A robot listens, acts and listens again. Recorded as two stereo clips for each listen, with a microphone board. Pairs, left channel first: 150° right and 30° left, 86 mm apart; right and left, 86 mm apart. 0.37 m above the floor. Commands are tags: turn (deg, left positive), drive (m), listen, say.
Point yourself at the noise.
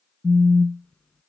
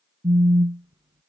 <turn deg="135"/>
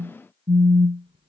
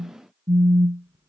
<turn deg="35"/>
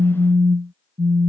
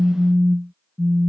<turn deg="-15"/>
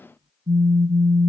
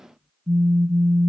<say>Found it: a phone buzzing, straight ahead.</say>